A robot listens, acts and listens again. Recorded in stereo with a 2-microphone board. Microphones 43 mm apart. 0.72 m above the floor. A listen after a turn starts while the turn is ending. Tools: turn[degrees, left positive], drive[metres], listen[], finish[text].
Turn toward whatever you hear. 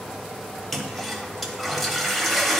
Action: turn[30]
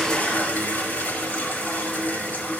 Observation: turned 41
Thought: So it is at 135° left.
Action: turn[135]
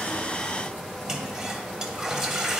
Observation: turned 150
Thought: The toilet flushing is now 15° right.
Action: turn[-15]
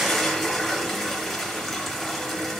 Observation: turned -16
Action: finish[Facing the toilet flushing.]